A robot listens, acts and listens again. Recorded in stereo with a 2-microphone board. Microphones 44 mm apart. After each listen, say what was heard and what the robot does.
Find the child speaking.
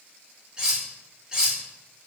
Keep listening.
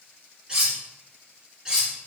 Keep listening.
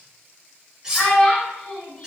The child speaking: about 30° left or 150° left. Turn 30° left.
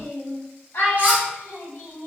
So it is at 120° left. Turn 120° left.
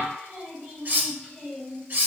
The child speaking is now 35° left. Turn 35° left.
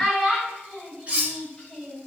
The child speaking is now 20° left. Turn 20° left.
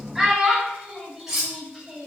Found it: a child speaking, straight ahead, 2 to 4 m away.